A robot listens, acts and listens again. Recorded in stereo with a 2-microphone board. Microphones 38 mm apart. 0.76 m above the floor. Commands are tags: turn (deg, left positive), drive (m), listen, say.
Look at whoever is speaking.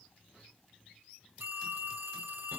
<listen/>
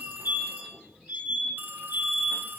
<listen/>
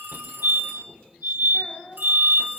<turn deg="45"/>
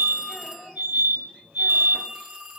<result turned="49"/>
<say>Found it: a child speaking, straight ahead, over 4 m away.</say>